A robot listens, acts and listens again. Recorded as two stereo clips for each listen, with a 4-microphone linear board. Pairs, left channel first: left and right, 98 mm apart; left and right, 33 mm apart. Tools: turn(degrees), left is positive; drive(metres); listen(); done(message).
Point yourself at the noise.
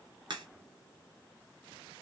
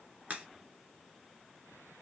turn(degrees=-50)
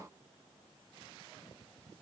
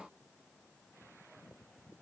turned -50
listen()
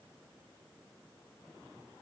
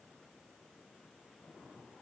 done("I heard a crack, but can't make it out now. It was about straight ahead or 80° right.")